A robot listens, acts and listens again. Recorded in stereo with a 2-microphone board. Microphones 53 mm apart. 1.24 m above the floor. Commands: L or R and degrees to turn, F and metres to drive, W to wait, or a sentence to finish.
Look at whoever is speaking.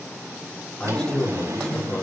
L30
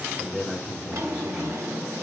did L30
R20
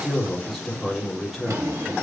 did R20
Found it: a man speaking, straight ahead.